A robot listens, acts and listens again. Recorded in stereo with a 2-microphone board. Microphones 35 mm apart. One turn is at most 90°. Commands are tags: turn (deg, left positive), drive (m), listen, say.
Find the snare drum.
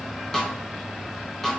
<turn deg="30"/>
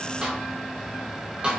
<turn deg="-30"/>
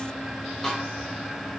<say>Facing the snare drum, 1 to 2 m away.</say>